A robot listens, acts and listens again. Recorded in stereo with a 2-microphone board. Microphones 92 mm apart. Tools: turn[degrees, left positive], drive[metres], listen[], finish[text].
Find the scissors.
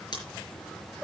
Thought: The scissors: about 50° left or 130° left.
Action: turn[50]
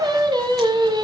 Action: listen[]
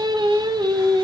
Action: listen[]
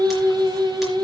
Action: finish[I heard scissors, but can't make it out now. It was about straight ahead or 80° left.]